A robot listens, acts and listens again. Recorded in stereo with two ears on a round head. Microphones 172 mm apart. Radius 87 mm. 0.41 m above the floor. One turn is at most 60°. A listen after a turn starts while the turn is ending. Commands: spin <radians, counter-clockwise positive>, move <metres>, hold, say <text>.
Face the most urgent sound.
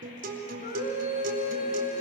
spin 0.79
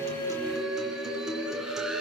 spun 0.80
say Found it: a scream, straight ahead.